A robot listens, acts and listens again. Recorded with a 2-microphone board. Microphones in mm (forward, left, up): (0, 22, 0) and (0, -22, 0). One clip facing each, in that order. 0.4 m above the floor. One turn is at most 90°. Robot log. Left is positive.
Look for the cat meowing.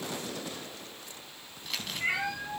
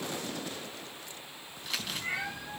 note: The cat meowing: about 60° left or 120° left.
cmd yaw +60
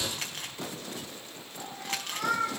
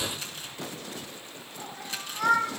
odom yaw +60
note: So it is at 10° right.
cmd yaw -10
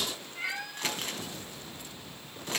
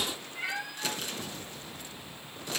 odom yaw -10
end: Facing the cat meowing.